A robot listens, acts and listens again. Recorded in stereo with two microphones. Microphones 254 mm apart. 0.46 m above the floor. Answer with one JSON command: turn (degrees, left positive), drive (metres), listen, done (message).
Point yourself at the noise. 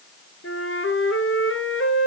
{"turn": 60}
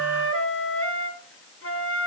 {"turn": 60}
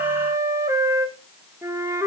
{"turn": -10}
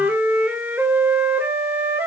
{"done": "Found it: a flute, straight ahead, 1 to 2 m away."}